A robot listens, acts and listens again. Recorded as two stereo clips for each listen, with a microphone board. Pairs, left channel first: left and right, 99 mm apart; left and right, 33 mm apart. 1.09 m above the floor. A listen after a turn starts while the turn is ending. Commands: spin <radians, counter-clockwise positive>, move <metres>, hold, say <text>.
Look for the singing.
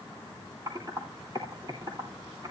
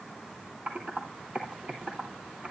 hold
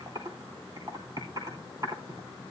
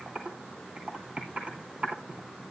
hold
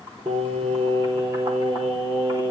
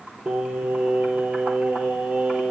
spin -1.05
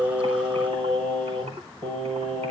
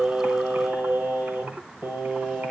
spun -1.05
spin -1.05
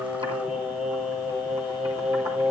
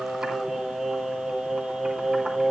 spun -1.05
spin -0.17
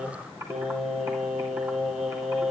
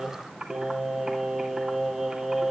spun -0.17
say Facing the singing, over 4 m away.